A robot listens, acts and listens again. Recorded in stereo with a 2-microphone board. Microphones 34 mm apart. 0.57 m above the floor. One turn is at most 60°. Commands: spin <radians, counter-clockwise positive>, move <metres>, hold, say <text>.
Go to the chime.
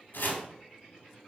hold
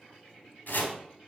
hold
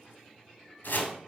say I can't make out a chime to turn to.